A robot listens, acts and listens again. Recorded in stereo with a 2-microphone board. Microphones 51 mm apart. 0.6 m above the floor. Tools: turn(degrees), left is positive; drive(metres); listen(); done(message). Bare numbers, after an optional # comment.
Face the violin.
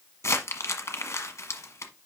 listen()
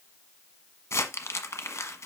listen()
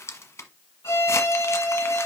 # The violin: about 70° left or 110° left.
turn(70)
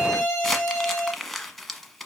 # So it is at 40° left.
turn(40)
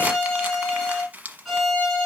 done("Facing the violin, 2 to 4 m away.")